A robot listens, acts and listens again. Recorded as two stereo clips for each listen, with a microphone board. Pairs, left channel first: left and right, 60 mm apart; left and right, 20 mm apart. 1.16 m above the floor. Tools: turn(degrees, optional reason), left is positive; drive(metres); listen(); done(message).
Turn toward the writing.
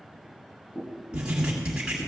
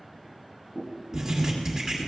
turn(degrees=-15, reason="The writing: about 15° right or 165° right.")
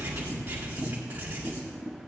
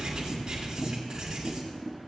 turn(degrees=-150, reason="So it is at 150° right.")
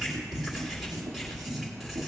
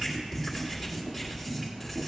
done("Facing the writing.")